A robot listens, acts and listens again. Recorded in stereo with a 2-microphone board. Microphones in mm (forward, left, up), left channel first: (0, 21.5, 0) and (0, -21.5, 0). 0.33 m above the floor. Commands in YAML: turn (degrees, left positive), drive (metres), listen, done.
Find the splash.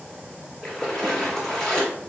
turn: 30
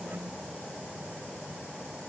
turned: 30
listen: true
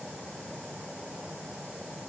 done: "I heard a splash, but can't make it out now. It was about 25° right or 145° left."